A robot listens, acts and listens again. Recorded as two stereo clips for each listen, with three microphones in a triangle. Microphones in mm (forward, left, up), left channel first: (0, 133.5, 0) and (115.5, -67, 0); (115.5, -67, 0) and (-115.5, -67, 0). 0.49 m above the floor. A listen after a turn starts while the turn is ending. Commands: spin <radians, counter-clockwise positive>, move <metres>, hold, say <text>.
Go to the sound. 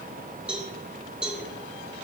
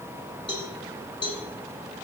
spin 0.44
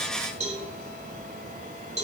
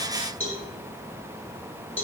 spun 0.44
move 1.0
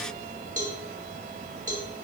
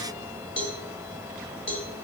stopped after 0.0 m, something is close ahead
spin -0.17
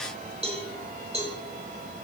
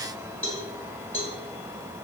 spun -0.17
say Something is in my way. I am facing the cowbell but have not reached it.